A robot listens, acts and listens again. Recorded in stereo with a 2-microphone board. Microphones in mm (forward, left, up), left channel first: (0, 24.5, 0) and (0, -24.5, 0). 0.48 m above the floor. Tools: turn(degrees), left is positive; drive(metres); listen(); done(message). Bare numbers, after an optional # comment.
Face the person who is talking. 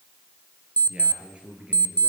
# The man speaking: about 25° right or 155° right.
turn(-25)
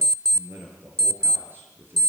# So it is at 135° right.
turn(-135)
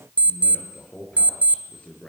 # The man speaking is now 25° left.
turn(25)
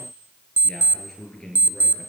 # The man speaking is now 15° left.
turn(15)
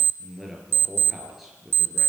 done("Facing the man speaking.")